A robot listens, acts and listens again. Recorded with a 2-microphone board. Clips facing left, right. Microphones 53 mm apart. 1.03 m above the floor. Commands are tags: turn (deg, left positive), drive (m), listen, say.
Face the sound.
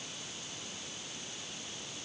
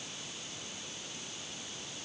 <listen/>
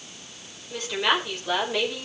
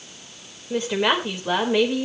<turn deg="-20"/>
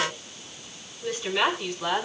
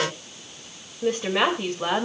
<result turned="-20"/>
<turn deg="-35"/>
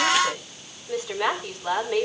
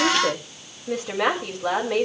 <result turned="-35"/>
<turn deg="-110"/>
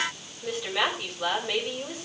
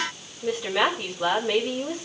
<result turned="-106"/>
<say>Facing the woman speaking.</say>